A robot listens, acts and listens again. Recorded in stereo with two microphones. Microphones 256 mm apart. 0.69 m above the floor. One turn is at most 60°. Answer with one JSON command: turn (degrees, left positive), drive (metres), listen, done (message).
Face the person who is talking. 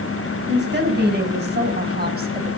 {"turn": -40}
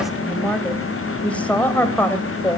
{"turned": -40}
{"turn": 10}
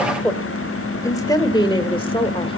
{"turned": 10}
{"turn": 20}
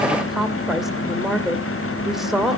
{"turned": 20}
{"done": "Facing the woman speaking."}